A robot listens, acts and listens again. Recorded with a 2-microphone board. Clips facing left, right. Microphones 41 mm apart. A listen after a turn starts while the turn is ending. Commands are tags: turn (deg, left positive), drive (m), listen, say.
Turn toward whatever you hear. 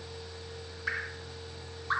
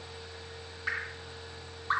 <turn deg="-30"/>
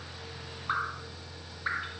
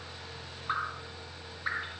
<turn deg="15"/>
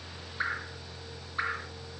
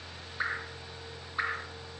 <say>Found it: dripping, straight ahead, 1 to 2 m away.</say>